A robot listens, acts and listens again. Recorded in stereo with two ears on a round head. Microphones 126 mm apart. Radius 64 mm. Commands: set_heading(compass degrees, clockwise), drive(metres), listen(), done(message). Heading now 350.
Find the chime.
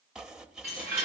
set_heading(20)
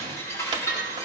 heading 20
set_heading(0)
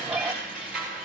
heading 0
done("Facing the chime.")